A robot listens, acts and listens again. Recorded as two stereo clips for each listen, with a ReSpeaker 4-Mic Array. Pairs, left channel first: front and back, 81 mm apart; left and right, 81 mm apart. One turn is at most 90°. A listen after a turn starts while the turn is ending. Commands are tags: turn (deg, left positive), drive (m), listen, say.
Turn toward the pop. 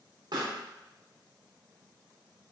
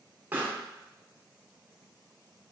<turn deg="-90"/>
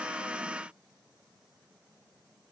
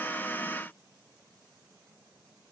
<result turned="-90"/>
<turn deg="-70"/>
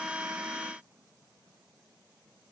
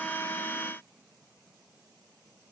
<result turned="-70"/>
<say>I heard a pop from this way, but can't make it out now.</say>